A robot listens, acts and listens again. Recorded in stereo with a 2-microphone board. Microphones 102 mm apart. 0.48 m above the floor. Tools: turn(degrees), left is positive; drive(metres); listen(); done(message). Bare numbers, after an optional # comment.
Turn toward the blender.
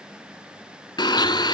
# The blender: about 45° left or 135° left.
turn(45)
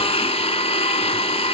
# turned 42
# So it is at 90° left.
turn(90)
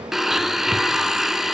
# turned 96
done("Facing the blender.")